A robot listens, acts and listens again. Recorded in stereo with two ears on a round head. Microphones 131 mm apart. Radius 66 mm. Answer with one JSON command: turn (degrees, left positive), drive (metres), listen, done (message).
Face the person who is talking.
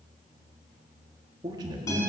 {"turn": -25}
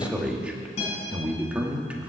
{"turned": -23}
{"turn": -10}
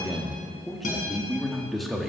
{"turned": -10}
{"done": "Found it: a man speaking, straight ahead, 1 to 2 m away."}